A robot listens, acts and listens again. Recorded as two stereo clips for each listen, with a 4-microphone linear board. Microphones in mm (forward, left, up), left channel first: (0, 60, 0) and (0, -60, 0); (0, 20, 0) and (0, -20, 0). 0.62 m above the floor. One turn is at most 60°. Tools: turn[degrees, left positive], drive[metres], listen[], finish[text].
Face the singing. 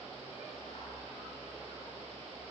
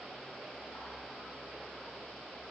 Action: listen[]
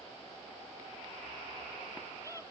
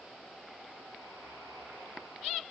Action: listen[]
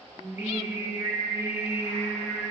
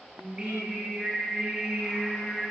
Action: turn[-30]
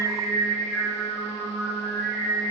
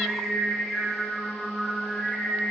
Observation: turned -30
Thought: So it is at 15° left.
Action: turn[15]
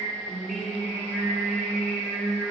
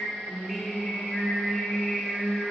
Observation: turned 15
Action: finish[Facing the singing.]